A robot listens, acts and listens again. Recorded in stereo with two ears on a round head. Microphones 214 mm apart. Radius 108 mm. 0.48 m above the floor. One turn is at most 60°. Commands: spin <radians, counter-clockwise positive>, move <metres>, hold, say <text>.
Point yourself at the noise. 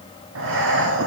spin -1.05
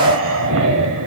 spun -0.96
spin -1.05
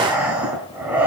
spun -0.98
say Facing the breathing.